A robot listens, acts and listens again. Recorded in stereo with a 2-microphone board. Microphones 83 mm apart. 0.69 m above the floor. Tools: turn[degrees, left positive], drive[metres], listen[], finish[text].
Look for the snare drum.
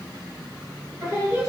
Action: listen[]
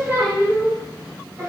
Action: listen[]
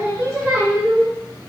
Action: finish[I can't make out a snare drum to turn to.]